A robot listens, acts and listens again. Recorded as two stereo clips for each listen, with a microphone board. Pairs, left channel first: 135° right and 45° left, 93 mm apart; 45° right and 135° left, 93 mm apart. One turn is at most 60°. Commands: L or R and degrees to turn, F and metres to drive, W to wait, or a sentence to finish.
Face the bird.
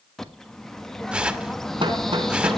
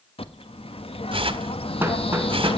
R50
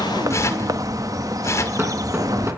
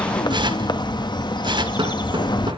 Facing the bird.